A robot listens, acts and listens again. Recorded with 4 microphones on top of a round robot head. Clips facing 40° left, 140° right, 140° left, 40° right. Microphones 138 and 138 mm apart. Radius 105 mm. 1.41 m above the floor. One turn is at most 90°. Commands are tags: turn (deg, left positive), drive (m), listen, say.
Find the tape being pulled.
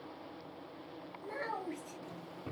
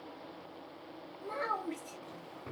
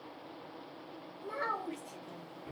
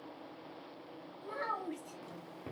<listen/>
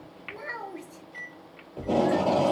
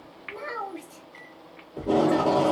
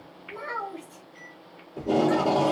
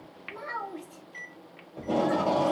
<turn deg="90"/>
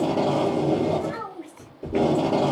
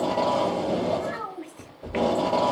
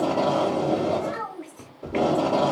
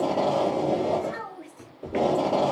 <turn deg="45"/>
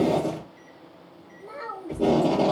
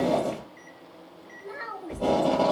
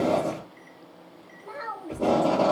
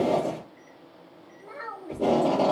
<turn deg="25"/>
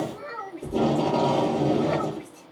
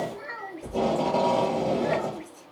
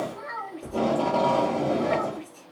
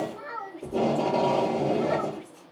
<say>Facing the tape being pulled, 1 to 2 m away.</say>